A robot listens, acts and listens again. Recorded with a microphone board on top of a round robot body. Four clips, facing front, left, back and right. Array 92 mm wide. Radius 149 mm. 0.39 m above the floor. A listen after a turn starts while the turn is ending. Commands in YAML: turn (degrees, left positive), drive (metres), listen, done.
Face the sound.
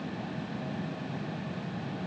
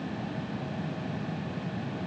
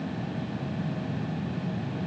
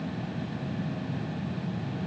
listen: true
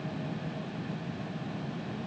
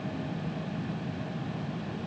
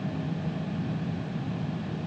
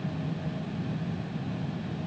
listen: true
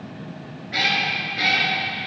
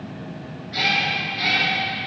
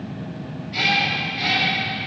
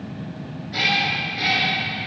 turn: -10
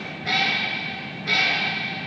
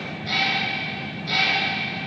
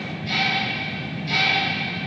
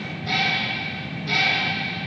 turn: -10
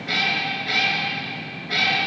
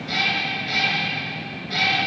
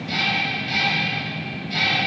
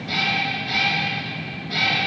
done: "Found it: a cat meowing, straight ahead."